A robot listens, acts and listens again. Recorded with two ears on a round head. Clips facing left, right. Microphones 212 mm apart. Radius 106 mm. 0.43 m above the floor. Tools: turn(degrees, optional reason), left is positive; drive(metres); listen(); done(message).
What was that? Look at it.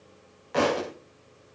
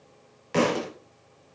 turn(degrees=-40, reason="The thud: about 40° right or 140° right.")
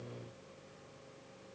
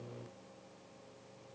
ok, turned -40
listen()
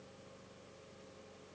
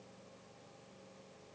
done("I heard a thud, but can't make it out now. It was about straight ahead or 100° right.")